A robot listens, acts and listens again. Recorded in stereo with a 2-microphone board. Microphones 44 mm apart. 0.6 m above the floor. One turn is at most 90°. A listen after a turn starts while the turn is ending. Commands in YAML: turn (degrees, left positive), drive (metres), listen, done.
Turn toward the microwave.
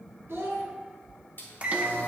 turn: -30
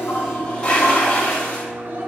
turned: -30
turn: -90
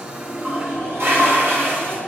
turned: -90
turn: -25
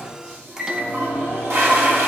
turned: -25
turn: -15
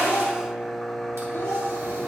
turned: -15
done: "Found it: a microwave, straight ahead, under 1 m away."